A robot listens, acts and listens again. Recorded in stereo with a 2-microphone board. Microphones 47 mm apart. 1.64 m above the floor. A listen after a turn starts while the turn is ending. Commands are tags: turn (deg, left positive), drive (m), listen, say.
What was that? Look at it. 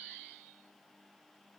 <listen/>
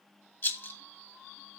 <turn deg="50"/>
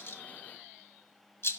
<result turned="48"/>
<turn deg="70"/>
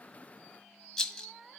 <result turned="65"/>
<say>Found it: a rattle, straight ahead.</say>